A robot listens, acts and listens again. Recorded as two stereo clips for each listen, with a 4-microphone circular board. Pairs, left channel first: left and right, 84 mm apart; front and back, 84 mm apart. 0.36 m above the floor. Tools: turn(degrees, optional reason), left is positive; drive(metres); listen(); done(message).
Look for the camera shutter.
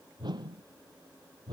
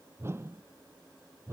listen()
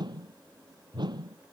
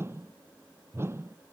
listen()
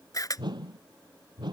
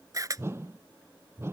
turn(degrees=135, reason="The camera shutter: 135° left.")
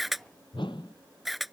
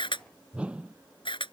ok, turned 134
done("Facing the camera shutter.")